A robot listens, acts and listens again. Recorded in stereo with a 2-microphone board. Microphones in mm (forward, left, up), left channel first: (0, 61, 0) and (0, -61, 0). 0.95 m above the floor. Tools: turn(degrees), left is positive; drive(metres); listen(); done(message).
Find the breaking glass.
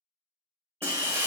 turn(degrees=-20)
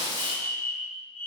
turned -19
turn(degrees=-140)
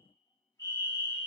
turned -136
done("I heard breaking glass from this way, but can't make it out now.")